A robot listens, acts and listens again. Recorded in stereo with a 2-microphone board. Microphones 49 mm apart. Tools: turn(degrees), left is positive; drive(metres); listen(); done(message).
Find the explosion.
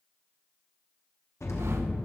turn(degrees=75)
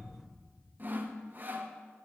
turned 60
listen()
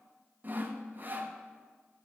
done("I heard an explosion, but can't make it out now. It was about 15° left or 45° left.")